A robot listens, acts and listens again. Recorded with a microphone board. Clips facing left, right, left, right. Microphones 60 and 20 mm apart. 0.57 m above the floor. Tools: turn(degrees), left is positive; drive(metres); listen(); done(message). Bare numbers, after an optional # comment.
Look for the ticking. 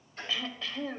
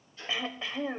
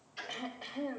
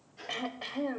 turn(90)
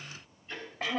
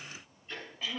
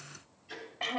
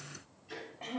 done("Facing the ticking.")